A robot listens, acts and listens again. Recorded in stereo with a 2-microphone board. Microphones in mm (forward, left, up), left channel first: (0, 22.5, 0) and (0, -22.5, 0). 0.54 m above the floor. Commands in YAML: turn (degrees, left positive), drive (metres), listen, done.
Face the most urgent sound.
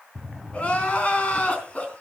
turn: 30
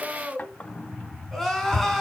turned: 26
done: "Found it: crying, straight ahead."